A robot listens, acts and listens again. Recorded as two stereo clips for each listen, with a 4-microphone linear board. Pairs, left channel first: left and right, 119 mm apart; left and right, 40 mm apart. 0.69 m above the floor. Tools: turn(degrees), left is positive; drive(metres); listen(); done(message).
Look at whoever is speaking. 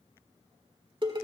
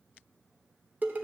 listen()
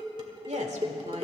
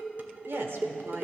turn(degrees=-70)
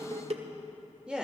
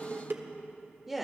turn(degrees=-10)
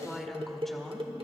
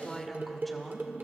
done("Facing the woman speaking, 1 to 2 m away.")